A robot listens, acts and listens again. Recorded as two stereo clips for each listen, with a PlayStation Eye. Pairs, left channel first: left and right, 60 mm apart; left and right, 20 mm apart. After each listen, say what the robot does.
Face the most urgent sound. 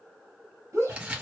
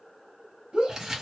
Turn 55° right.
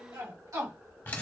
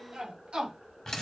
Turn 65° right.
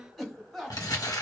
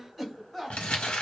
Found it: a shout, straight ahead.